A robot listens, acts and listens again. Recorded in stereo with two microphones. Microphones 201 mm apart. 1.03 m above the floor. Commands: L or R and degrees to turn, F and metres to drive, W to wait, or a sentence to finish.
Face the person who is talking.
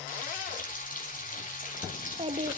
R30
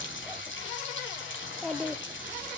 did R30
Facing the child speaking, 1 to 2 m away.